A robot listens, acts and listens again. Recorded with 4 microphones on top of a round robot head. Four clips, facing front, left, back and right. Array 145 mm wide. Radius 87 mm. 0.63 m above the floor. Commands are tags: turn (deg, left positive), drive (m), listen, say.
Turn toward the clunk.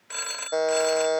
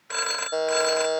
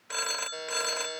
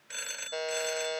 <listen/>
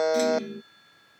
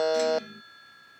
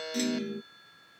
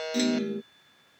<turn deg="-100"/>
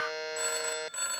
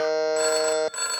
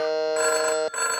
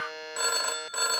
<say>Facing where the clunk came from. I can't hear it now.</say>